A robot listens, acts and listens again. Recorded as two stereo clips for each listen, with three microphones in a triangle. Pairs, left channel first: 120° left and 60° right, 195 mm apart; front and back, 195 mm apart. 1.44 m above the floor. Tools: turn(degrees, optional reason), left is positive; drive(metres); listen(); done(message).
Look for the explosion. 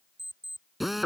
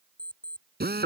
listen()
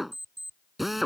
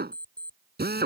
listen()
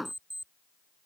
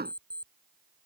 done("I can't make out an explosion to turn to.")